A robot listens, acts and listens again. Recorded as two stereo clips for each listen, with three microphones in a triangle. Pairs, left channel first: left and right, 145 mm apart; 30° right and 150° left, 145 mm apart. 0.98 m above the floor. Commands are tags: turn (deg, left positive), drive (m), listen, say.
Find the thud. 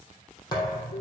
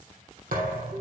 <turn deg="150"/>
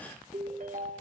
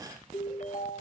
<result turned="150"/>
<say>Facing where the thud came from. I can't hear it now.</say>